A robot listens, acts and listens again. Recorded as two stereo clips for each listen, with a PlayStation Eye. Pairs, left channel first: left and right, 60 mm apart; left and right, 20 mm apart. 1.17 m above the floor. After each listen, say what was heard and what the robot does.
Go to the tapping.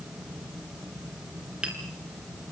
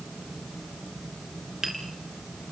The tapping: about 20° right or 160° right. Turn 20° right.
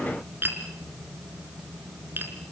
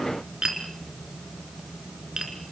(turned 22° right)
So it is at 140° right. Turn 140° right.
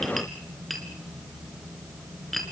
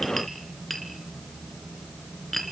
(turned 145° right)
Drive 1.0 m forward.
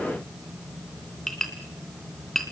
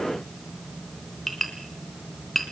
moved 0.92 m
The tapping is now 10° left. Turn 10° left.
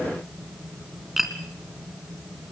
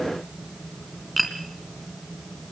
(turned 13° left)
Drive 1.0 m forward.
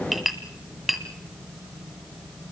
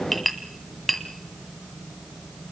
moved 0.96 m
Drive 1.0 m forward.
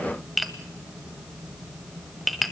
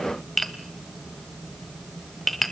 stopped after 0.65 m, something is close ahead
Arrived at the tapping, straight ahead.